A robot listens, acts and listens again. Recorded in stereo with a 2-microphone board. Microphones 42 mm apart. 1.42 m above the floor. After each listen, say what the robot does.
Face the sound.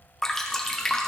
Turn 30° left.
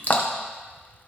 Turn 140° left.
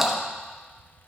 Facing the dripping, under 1 m away.